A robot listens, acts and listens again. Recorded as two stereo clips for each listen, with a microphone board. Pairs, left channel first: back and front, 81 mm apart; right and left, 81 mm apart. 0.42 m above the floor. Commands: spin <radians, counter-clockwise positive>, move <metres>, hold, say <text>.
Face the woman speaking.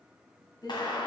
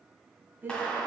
spin 2.71
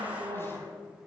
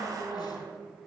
spin 0.17
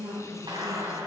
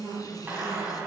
say Facing the woman speaking.